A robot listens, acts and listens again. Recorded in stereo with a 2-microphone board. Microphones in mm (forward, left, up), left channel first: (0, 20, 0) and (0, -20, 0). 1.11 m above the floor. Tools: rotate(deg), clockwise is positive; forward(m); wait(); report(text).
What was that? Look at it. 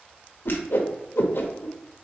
rotate(-70)
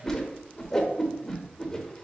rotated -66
rotate(-15)
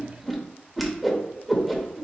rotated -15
report("Found it: a whoosh, straight ahead, under 1 m away.")